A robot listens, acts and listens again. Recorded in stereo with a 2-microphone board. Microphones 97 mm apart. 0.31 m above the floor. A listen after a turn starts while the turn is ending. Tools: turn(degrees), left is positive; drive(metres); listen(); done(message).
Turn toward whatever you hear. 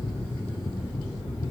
listen()
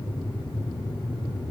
listen()
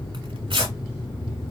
turn(degrees=-65)
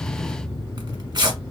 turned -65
turn(degrees=-50)
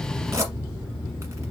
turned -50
turn(degrees=-30)
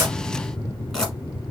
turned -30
done("Found it: tearing paper, straight ahead, 1 to 2 m away.")